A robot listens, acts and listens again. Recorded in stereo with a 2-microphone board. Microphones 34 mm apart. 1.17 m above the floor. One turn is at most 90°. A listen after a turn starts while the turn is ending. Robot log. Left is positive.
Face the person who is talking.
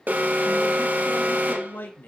note: The man speaking: about 75° left or 105° left.
cmd yaw +75
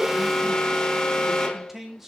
end: Found it: a man speaking, straight ahead, 2 to 4 m away.